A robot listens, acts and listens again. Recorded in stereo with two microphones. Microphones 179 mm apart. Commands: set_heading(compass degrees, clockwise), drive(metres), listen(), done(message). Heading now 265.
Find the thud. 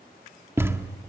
set_heading(295)
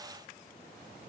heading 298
listen()
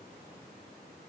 done("I heard a thud, but can't make it out now. It was about 20° left or 135° right.")